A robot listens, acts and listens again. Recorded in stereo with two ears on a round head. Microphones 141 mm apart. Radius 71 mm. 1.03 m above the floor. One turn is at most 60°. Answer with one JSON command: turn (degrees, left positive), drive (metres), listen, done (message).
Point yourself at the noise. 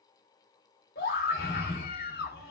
{"turn": 60}
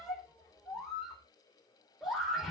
{"done": "Found it: a scream, straight ahead."}